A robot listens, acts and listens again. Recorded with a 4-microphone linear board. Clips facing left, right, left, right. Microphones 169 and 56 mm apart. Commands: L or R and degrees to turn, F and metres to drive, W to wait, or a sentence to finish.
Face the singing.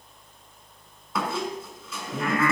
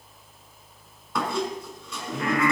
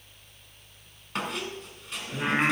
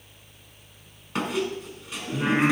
L35
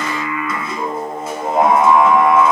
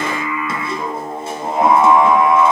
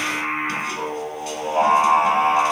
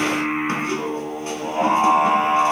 L105
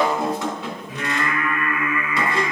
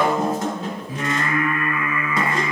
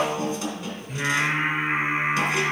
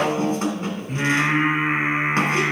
R30
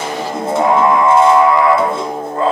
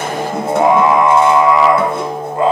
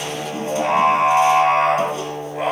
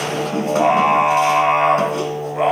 R15
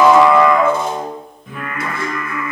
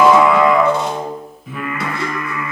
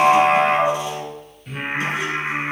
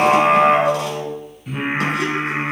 Facing the singing.